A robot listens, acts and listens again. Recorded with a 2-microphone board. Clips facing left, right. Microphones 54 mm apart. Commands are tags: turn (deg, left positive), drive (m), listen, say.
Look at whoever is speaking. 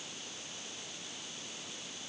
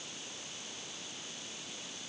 <listen/>
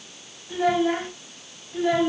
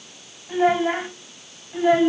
<turn deg="-20"/>
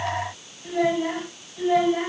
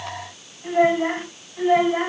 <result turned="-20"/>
<turn deg="-30"/>
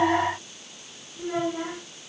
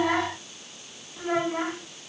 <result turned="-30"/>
<turn deg="-120"/>
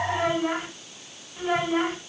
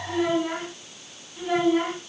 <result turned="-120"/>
<turn deg="20"/>
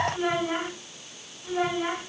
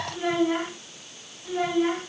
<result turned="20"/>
<say>Found it: a child speaking, straight ahead, over 4 m away.</say>